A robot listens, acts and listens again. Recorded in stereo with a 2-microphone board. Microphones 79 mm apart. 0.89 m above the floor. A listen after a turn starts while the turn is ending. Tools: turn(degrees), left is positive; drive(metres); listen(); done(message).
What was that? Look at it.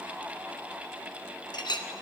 turn(degrees=65)
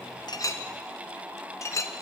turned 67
turn(degrees=40)
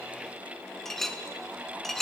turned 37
done("Facing the clink, under 1 m away.")